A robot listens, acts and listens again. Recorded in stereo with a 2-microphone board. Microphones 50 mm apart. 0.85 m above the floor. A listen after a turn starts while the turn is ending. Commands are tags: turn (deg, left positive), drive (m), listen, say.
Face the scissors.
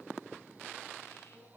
<listen/>
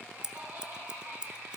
<turn deg="-15"/>
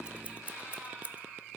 <turn deg="-150"/>
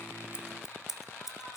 <turn deg="-10"/>
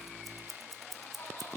<say>Facing the scissors.</say>